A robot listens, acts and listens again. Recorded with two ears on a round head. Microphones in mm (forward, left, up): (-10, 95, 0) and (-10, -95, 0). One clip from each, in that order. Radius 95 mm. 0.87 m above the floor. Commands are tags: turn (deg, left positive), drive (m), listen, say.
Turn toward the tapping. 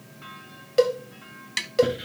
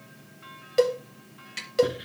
<turn deg="45"/>
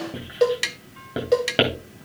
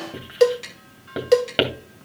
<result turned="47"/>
<turn deg="80"/>
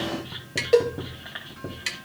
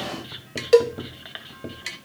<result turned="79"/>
<say>Found it: tapping, straight ahead, 1 to 2 m away.</say>